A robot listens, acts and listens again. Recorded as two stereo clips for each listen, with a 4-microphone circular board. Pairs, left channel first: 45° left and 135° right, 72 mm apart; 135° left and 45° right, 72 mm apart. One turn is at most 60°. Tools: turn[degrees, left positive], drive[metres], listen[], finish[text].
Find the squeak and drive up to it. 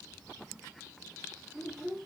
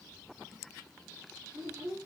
Action: listen[]
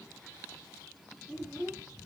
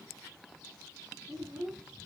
Action: listen[]
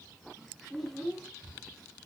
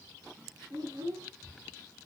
Action: finish[I can't make out a squeak, only a child speaking.]